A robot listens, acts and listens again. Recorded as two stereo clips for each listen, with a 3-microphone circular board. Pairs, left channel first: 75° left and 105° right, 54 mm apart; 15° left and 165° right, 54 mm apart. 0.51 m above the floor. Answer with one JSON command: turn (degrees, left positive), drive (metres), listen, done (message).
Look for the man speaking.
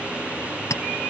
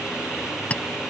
{"listen": true}
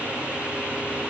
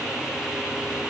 {"listen": true}
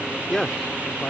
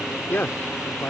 {"done": "Facing the man speaking."}